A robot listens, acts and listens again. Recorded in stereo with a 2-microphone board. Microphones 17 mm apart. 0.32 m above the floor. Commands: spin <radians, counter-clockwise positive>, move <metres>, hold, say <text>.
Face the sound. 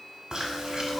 spin -0.87
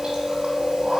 spin -1.31
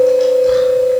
spin 0.26
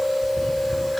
say Facing the chewing.